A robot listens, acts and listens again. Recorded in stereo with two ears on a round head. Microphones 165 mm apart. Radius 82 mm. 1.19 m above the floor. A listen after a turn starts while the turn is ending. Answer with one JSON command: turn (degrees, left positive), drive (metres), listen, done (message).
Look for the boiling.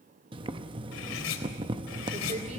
{"turn": -25}
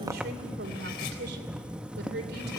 {"done": "Facing the boiling."}